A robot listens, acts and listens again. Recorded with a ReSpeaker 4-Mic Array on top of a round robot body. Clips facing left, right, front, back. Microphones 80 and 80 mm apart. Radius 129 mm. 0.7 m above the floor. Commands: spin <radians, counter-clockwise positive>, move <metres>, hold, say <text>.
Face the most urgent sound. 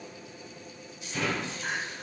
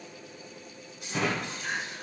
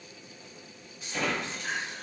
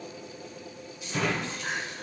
spin 2.62
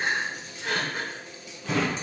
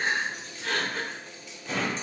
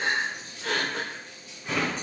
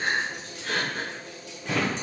spin 0.17
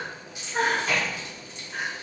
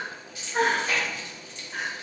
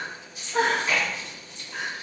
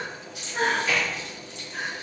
say Found it: crying, straight ahead.